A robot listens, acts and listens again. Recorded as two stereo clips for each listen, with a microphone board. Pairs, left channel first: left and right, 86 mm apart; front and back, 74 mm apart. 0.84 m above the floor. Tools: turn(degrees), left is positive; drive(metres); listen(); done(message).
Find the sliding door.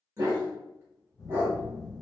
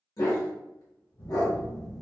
listen()
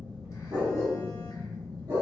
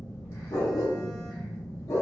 listen()
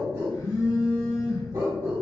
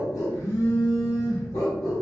done("I can't make out a sliding door, only a dog barking and a phone buzzing.")